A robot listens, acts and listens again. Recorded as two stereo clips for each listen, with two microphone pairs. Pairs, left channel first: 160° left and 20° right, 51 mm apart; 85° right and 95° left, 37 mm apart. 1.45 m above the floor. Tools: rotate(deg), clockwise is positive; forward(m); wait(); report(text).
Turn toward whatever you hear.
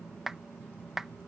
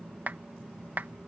rotate(-60)
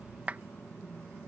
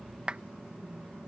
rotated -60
rotate(-35)
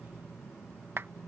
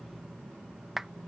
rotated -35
rotate(-10)
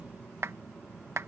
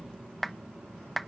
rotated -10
report("Found it: a clap, straight ahead.")